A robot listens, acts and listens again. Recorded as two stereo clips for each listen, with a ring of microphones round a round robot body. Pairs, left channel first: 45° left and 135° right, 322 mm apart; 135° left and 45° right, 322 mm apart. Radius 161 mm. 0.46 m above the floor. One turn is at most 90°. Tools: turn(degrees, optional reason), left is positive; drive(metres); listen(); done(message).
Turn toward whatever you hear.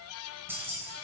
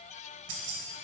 turn(degrees=-50, reason="The keys jangling: 50° right.")
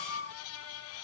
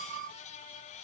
listen()
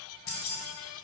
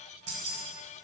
done("Found it: keys jangling, straight ahead, 1 to 2 m away.")